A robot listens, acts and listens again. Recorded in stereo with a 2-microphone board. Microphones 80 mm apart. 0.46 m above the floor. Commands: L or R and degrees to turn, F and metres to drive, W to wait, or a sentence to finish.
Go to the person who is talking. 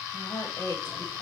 L65
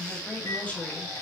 L25
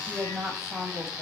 F1.0
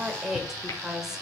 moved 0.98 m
F1.0
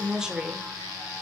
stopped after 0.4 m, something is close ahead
R15
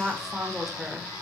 I am next to the woman speaking.